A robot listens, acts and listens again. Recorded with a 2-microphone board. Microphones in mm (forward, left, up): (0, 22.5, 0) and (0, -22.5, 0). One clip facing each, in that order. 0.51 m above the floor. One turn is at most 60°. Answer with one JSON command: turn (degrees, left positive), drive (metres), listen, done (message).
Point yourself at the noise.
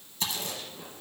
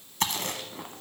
{"turn": -60}
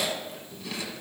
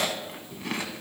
{"turn": -50}
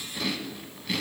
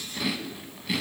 {"done": "Facing the chewing, under 1 m away."}